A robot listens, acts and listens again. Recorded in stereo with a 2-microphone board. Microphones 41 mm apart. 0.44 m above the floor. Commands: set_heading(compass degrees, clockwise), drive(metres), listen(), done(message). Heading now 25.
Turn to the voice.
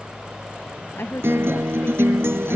set_heading(295)
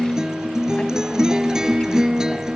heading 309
set_heading(294)
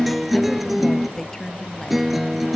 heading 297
set_heading(287)
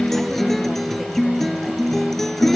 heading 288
listen()
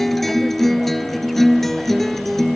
listen()
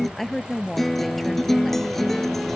done("Found it: a woman speaking, straight ahead.")